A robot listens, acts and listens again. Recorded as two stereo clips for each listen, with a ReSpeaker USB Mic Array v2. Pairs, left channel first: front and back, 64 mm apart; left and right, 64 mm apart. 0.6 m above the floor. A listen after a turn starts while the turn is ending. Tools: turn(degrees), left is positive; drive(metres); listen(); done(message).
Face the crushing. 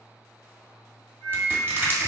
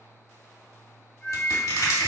turn(degrees=120)
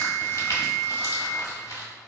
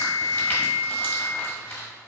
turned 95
turn(degrees=25)
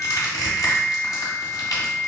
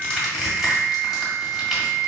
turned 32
done("Found it: crushing, straight ahead.")